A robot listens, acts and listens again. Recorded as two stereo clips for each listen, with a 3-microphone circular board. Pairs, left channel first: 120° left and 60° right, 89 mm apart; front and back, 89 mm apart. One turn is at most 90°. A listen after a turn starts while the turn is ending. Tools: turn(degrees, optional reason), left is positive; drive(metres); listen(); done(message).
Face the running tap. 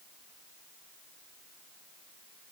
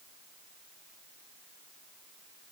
listen()
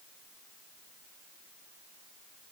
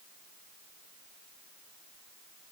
listen()
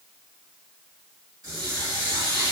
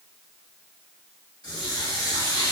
turn(degrees=-25, reason="The running tap: 25° right.")
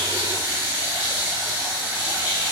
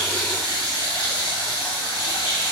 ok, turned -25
done("Facing the running tap, 1 to 2 m away.")